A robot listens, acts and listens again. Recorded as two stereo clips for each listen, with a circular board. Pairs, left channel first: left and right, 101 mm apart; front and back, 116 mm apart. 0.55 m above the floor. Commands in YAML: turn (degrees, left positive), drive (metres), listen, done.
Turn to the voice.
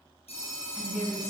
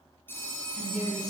done: "Facing the woman speaking, over 4 m away."